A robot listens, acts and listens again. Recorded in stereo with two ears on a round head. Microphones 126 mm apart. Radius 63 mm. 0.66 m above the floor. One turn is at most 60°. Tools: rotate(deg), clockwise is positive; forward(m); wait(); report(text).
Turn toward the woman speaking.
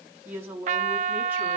rotate(30)
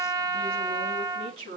rotate(60)
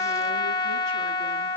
rotate(60)
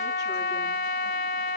rotate(20)
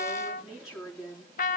report("Facing the woman speaking.")